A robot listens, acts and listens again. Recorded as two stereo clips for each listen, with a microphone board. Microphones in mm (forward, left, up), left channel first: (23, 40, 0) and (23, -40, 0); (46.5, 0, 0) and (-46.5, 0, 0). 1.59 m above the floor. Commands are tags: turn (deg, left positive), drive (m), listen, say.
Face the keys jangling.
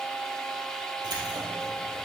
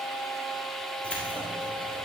<turn deg="-65"/>
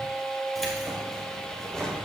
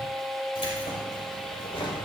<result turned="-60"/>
<turn deg="10"/>
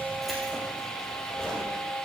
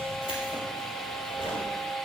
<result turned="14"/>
<say>Facing the keys jangling, over 4 m away.</say>